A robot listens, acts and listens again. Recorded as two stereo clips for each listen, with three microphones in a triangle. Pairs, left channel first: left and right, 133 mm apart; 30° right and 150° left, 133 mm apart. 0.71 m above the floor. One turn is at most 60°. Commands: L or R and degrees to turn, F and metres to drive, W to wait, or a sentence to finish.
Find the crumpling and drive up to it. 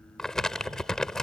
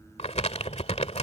F1.0
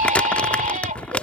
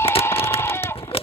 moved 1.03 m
L10
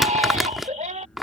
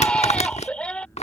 F1.0
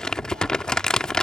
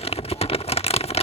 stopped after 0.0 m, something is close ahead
I am next to the crumpling.